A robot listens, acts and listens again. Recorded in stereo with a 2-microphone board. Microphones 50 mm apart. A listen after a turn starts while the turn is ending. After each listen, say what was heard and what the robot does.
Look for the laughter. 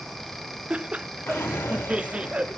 The laughter: about 25° right or 155° right. Turn 25° right.
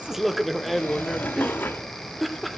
Facing the laughter.